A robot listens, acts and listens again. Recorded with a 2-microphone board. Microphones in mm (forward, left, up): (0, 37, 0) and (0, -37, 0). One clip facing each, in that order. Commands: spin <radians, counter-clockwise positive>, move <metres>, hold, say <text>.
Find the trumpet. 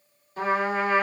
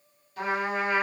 spin 0.52
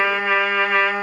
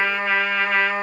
spin 0.17
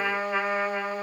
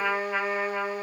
say Facing the trumpet, 1 to 2 m away.